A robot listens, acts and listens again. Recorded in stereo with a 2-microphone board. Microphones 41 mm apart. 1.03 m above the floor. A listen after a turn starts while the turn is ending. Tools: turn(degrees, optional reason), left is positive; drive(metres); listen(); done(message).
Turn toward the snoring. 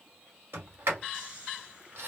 turn(degrees=-25, reason="The snoring: about 25° right or 155° right.")
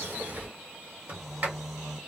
done("Facing the snoring.")